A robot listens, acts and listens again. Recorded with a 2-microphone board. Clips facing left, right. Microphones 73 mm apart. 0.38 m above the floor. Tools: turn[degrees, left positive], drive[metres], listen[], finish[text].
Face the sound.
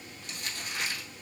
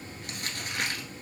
Thought: The crumpling: about 60° right or 120° right.
Action: turn[-60]
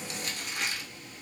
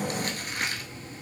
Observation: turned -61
Thought: So it is at 55° right.
Action: turn[-55]
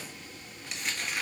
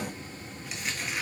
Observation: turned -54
Action: finish[Facing the crumpling.]